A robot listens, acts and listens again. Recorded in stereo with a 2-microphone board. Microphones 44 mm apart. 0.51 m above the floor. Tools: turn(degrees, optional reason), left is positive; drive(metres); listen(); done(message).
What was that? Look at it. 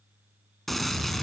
turn(degrees=30)
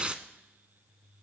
turn(degrees=-25, reason="So it is at 25° right.")
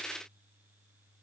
done("Facing where the gunshot came from. I can't hear it now.")